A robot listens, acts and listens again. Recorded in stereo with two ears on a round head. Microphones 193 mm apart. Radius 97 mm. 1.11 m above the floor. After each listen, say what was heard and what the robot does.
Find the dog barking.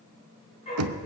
The dog barking: about 30° left or 150° left. Turn 30° left.
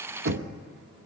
Keep listening.
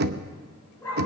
So it is at 10° left. Turn 10° left.
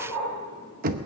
The dog barking is now 10° left. Turn 10° left.
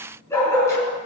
The dog barking is now 15° left. Turn 15° left.
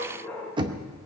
Found it: a dog barking, straight ahead.